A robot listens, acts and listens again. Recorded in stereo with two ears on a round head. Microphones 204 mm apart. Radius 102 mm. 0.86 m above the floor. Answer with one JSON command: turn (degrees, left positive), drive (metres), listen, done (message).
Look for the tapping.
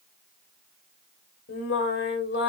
{"listen": true}
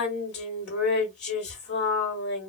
{"listen": true}
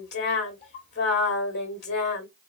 {"done": "I can't make out tapping, only singing."}